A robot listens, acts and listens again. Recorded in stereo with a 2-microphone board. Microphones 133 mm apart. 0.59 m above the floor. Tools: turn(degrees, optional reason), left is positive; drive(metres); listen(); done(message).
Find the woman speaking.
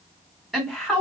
turn(degrees=30)
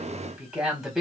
turn(degrees=-30)
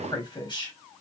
turn(degrees=35, reason="So it is at 35° left.")
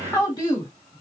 turn(degrees=35, reason="The woman speaking is now 35° left.")
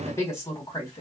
turn(degrees=35, reason="The woman speaking is now 35° left.")
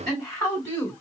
turn(degrees=20, reason="The woman speaking is now 20° left.")
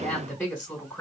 turn(degrees=10, reason="The woman speaking is now 10° left.")
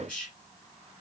done("Found it: a woman speaking, straight ahead.")